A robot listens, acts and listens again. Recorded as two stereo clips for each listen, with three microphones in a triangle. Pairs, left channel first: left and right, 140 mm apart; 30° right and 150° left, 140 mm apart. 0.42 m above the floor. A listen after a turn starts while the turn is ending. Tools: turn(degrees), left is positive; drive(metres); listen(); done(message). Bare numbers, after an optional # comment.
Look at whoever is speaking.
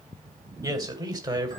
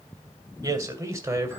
# The man speaking: 145° right.
turn(-145)
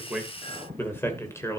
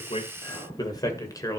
# The man speaking is now 25° left.
turn(25)
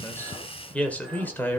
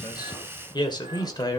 # The man speaking is now 20° left.
turn(20)
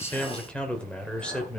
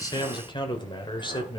# The man speaking is now 10° left.
turn(10)
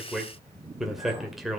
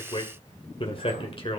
done("Found it: a man speaking, straight ahead, 2 to 4 m away.")